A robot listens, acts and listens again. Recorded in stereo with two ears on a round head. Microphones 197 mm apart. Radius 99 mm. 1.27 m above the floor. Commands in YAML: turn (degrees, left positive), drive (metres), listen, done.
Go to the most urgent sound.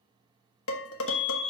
turn: 30
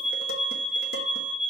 turn: 120
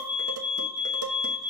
drive: 1.0
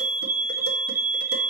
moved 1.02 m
turn: -10
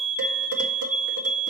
drive: 1.0
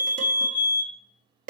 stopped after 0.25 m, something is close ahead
turn: -10
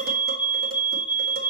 done: "Arrived at the fire alarm, straight ahead."